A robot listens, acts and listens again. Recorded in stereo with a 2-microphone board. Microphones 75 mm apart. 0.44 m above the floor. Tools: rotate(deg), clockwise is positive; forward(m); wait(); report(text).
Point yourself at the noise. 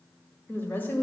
rotate(-30)
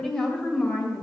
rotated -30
rotate(-15)
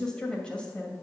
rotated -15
rotate(-15)
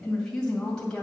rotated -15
rotate(-10)
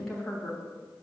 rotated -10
report("Facing the woman speaking.")